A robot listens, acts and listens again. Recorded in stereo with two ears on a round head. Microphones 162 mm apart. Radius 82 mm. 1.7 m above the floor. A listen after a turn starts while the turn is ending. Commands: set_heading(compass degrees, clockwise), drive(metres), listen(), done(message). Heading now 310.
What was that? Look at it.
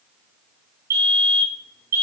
set_heading(330)
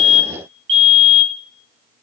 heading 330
set_heading(110)
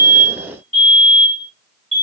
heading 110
set_heading(135)
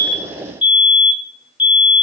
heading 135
done("Facing the fire alarm, over 4 m away.")